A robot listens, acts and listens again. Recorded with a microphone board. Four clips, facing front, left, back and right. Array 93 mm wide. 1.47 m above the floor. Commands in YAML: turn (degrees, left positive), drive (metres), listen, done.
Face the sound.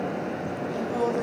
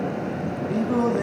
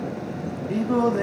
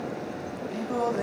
turn: 160
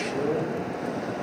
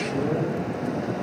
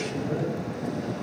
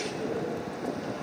listen: true
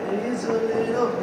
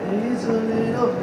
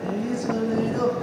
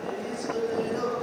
turn: 40
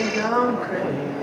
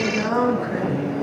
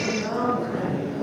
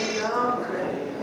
turn: -10
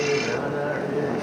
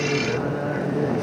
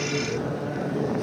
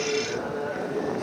done: "Found it: singing, straight ahead, 2 to 4 m away."